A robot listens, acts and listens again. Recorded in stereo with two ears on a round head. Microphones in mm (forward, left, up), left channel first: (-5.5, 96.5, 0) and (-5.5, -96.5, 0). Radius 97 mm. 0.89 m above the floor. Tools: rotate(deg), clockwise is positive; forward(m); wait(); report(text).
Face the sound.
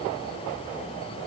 wait()
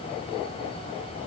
wait()
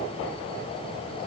report("I can't make out anything to turn to.")